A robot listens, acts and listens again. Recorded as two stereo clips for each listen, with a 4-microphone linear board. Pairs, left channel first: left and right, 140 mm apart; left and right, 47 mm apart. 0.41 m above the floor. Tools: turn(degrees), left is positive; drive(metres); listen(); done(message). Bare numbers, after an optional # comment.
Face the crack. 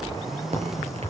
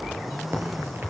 # The crack: about 50° right or 130° right.
turn(-50)
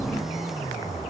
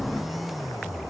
listen()
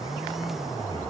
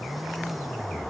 done("I heard a crack, but can't make it out now. It was about straight ahead or 80° right.")